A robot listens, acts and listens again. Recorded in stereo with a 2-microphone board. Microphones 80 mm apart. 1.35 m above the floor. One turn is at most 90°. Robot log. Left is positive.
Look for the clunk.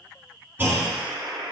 note: The clunk: about 30° right or 150° right.
cmd yaw -30
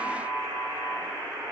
cmd idle
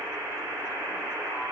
end: I heard a clunk, but can't make it out now. It was about straight ahead or 120° right.